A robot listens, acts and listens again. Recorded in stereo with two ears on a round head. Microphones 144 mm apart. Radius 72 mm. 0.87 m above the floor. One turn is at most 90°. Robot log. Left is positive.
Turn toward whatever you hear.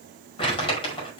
note: The crumpling: about 35° left or 145° left.
cmd yaw +35
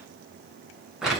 end: Found it: crumpling, straight ahead.